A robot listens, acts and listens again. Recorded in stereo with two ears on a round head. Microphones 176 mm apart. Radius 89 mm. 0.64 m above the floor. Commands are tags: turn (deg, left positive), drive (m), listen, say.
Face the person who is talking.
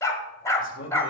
<turn deg="65"/>
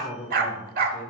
<turn deg="10"/>
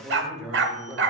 <say>Facing the man speaking.</say>